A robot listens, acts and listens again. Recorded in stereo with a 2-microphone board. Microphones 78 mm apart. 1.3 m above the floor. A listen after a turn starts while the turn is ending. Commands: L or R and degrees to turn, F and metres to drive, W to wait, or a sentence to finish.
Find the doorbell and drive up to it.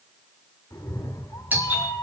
R20
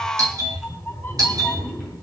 R135
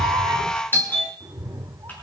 L25
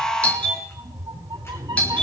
L15
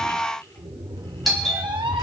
F1.0
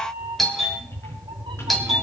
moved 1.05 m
F1.0
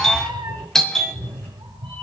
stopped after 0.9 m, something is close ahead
Arrived at the doorbell, straight ahead.